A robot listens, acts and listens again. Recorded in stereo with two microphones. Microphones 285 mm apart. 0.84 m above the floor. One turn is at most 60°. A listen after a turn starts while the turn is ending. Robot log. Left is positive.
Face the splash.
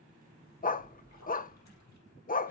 note: The splash: about 60° left or 120° left.
cmd yaw +60
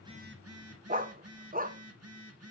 cmd idle
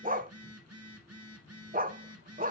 end: I heard a splash, but can't make it out now. It was about straight ahead or 60° left.